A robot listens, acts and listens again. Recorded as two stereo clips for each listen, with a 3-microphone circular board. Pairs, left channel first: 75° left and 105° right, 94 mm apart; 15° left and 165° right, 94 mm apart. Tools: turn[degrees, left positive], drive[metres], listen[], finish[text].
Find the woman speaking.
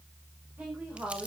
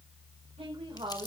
Thought: The woman speaking: straight behind.
Action: turn[180]
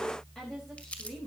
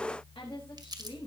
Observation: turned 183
Thought: The woman speaking is now 10° right.
Action: turn[-10]
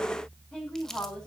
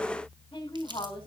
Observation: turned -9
Action: finish[Found it: a woman speaking, straight ahead, over 4 m away.]